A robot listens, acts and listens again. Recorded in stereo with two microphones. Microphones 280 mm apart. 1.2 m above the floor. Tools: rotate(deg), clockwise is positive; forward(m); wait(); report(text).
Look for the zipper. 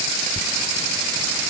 rotate(-30)
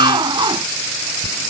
rotate(15)
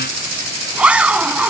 report("Found it: a zipper, straight ahead.")